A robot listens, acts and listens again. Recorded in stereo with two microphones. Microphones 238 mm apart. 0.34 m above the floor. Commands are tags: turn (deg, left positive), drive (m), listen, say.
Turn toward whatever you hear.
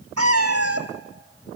<turn deg="-90"/>
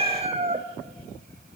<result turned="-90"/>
<turn deg="-30"/>
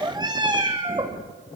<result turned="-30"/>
<turn deg="-20"/>
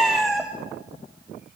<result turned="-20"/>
<say>Found it: a cat meowing, straight ahead.</say>